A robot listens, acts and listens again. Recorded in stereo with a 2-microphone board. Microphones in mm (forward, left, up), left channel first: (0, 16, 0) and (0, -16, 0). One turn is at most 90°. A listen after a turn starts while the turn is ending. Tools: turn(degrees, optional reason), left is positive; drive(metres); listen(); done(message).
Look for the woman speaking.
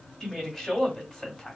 turn(degrees=15, reason="The woman speaking: about 15° left or 165° left.")
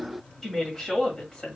turn(degrees=20, reason="The woman speaking: about 20° left or 160° left.")
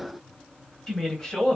turn(degrees=25, reason="The woman speaking: about 25° left or 155° left.")
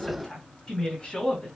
turn(degrees=20, reason="The woman speaking: about 20° left or 160° left.")
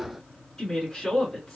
turn(degrees=30)
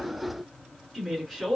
turn(degrees=-15, reason="So it is at 15° right.")
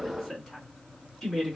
done("Found it: a woman speaking, straight ahead.")